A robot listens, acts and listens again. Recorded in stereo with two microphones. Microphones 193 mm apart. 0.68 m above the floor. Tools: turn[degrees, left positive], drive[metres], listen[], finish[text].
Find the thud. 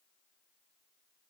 Action: listen[]
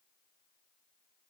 Action: listen[]
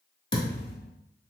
Thought: The thud: about 70° left or 110° left.
Action: turn[70]
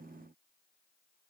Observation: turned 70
Action: listen[]
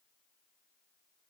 Action: finish[I heard a thud, but can't make it out now. It was about straight ahead or 40° left.]